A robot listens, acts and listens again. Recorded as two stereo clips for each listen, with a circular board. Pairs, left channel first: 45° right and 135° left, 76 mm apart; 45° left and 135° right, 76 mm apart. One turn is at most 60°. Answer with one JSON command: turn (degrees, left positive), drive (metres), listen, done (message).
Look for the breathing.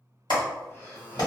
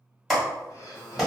{"turn": 15}
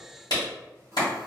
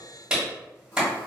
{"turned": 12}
{"listen": true}
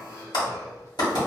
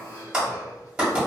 {"done": "Facing the breathing."}